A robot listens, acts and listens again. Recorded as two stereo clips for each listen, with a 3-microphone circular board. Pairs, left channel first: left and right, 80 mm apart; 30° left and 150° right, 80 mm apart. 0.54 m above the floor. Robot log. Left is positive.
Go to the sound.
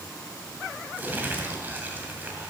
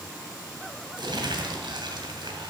note: The crumpling: 155° right.
cmd yaw -155
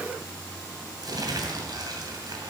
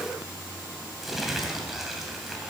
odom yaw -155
note: The crumpling is now 65° right.
cmd yaw -65
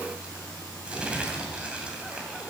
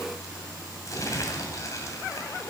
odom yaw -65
note: The crumpling is now 15° right.
cmd yaw -15
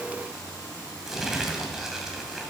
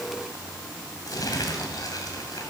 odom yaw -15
cmd fwd 1.0
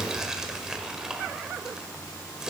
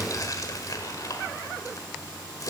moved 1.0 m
note: The crumpling is now 10° right.
cmd yaw -10
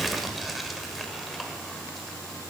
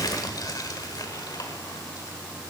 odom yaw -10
cmd fwd 1.0
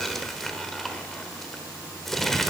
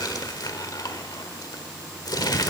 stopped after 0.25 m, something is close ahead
end: I am next to the crumpling.